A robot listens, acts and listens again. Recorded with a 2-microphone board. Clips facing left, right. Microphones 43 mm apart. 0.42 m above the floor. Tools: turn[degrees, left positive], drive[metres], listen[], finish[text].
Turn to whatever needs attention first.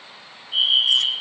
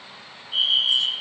Action: turn[30]
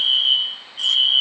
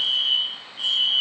Thought: So it is at 145° left.
Action: turn[145]
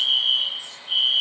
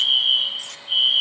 Action: finish[Found it: a fire alarm, straight ahead.]